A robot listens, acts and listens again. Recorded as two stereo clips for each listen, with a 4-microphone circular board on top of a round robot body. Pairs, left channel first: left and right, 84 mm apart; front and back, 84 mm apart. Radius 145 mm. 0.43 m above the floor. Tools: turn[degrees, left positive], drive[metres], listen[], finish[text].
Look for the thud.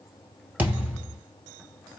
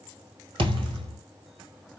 Thought: The thud: 160° right.
Action: turn[-160]
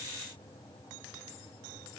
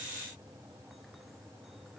Action: finish[I heard a thud from this way, but can't make it out now.]